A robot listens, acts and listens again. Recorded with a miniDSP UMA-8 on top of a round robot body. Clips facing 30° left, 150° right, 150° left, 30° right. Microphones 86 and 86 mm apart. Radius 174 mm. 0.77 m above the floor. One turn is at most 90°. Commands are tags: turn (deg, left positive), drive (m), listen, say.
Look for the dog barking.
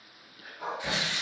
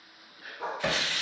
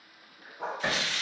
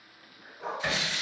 <turn deg="90"/>
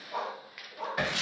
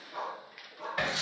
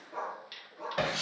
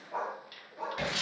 <say>Found it: a dog barking, straight ahead.</say>